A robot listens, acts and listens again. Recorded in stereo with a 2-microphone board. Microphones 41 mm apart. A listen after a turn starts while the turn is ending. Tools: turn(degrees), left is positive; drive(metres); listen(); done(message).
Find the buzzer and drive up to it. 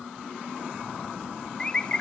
listen()
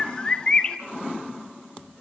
listen()
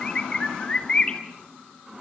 done("I can't make out a buzzer to turn to.")